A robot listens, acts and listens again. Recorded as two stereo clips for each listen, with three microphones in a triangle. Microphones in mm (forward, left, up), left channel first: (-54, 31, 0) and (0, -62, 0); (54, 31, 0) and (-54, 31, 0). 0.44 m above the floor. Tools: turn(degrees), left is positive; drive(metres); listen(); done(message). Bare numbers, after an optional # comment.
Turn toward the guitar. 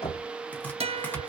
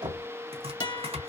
# The guitar: 45° right.
turn(-45)
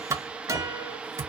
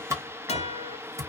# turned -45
done("Facing the guitar.")